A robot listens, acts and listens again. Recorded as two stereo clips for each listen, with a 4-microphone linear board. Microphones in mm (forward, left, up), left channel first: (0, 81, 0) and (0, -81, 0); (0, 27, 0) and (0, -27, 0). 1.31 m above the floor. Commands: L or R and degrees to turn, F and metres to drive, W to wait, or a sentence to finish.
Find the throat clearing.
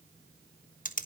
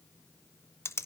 W
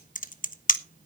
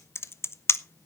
W
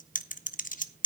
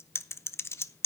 I can't make out throat clearing, only typing on a keyboard.